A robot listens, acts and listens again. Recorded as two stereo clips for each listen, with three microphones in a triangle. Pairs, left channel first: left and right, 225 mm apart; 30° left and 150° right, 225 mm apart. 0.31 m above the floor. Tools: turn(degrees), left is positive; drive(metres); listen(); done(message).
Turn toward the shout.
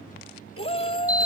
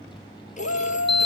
turn(degrees=25)
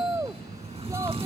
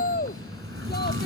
turn(degrees=-15)
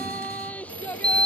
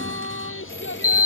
done("Facing the shout.")